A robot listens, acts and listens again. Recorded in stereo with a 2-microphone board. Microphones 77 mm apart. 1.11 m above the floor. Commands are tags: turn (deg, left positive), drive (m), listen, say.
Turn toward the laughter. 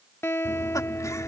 <turn deg="45"/>
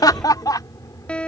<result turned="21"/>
<turn deg="55"/>
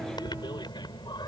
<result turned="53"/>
<turn deg="80"/>
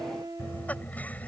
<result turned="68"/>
<turn deg="20"/>
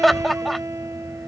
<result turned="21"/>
<say>Found it: laughter, straight ahead.</say>